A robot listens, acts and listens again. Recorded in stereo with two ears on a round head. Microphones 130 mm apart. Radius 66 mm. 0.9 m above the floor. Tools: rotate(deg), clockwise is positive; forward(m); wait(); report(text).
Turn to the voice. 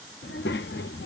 rotate(-90)
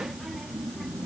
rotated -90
report("Facing the child speaking.")